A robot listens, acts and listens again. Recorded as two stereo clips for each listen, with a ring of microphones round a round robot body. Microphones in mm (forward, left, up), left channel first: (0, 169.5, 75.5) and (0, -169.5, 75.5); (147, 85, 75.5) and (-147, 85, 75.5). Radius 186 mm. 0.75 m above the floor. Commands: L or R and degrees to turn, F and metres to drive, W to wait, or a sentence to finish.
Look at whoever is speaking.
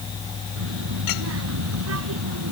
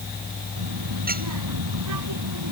R140
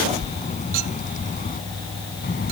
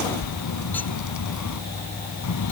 L25
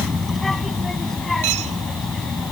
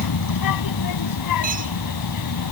Facing the child speaking.